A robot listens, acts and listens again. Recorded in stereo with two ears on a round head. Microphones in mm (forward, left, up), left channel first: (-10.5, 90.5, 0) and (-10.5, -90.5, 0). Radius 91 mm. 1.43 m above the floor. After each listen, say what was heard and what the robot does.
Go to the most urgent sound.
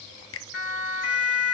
The siren: about 55° left or 125° left. Turn 55° left.
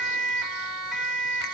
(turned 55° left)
Drive 1.0 m forward.
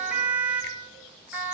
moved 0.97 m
The siren is now 10° right. Turn 10° right.
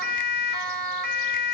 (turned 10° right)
Drive 1.0 m forward.
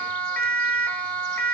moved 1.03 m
Drive 1.0 m forward.
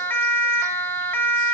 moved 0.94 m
The siren is now 10° left. Turn 10° left.
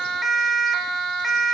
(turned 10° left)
Drive 1.0 m forward.
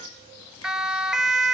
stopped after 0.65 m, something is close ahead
Arrived at the siren, straight ahead.